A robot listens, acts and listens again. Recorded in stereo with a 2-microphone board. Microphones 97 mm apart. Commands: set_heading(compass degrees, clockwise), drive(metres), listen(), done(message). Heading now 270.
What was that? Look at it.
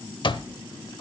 set_heading(210)
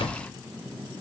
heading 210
set_heading(150)
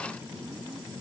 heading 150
listen()
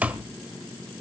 set_heading(165)
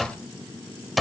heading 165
done("Facing the alarm clock, under 1 m away.")